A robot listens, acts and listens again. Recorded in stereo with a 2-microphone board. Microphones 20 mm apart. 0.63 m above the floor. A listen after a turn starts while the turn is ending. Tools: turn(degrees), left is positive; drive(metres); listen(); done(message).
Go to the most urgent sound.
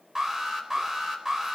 turn(degrees=-20)
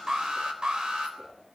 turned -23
turn(degrees=-135)
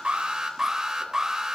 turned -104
turn(degrees=-30)
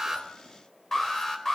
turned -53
turn(degrees=20)
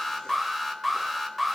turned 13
drive(metres=1.0)
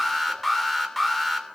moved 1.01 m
turn(degrees=10)
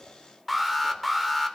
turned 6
drive(metres=1.0)
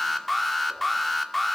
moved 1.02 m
turn(degrees=10)
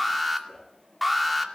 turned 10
drive(metres=1.0)
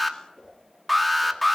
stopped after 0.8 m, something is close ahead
done("Arrived at the alarm, straight ahead.")